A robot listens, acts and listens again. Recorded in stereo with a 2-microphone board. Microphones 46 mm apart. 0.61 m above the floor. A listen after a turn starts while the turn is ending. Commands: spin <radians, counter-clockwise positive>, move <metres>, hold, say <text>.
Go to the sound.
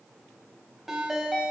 spin -0.52
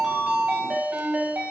spin -2.53
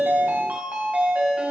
spin -0.61
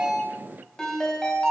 spin 0.17
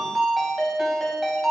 move 1.0
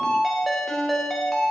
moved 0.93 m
move 1.0
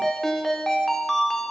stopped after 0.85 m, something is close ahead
say Arrived at the ringtone, straight ahead.